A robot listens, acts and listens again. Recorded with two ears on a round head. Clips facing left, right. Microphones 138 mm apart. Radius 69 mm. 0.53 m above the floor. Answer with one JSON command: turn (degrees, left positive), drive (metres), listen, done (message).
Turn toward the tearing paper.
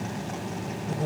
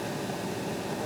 {"listen": true}
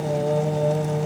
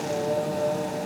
{"listen": true}
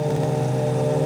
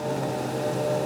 {"done": "I can't make out tearing paper to turn to."}